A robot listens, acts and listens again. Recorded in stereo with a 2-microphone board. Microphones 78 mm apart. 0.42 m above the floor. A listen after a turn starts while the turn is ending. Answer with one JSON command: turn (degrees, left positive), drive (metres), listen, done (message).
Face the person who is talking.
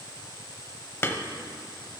{"listen": true}
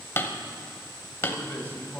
{"turn": 25}
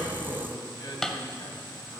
{"turn": 120}
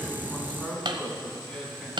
{"turn": 10}
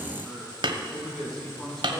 {"done": "Facing the man speaking."}